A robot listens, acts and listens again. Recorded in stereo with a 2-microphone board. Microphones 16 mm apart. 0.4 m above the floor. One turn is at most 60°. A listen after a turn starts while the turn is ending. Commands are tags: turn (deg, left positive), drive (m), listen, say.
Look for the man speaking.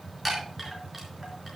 <listen/>
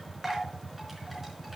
<listen/>
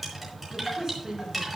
<turn deg="-35"/>
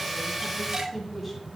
<say>Found it: a man speaking, straight ahead.</say>